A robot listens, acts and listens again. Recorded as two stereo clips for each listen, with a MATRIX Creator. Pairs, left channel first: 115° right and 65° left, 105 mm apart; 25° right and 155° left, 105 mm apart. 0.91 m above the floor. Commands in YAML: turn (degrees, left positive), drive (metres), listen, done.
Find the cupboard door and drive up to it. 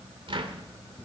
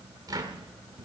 turn: 105
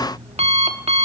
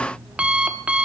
listen: true
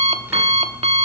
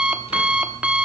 listen: true
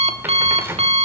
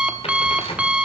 drive: 1.0
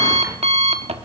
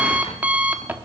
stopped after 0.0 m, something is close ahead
listen: true
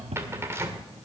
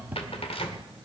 done: "Something is in my way. I am facing the cupboard door but have not reached it."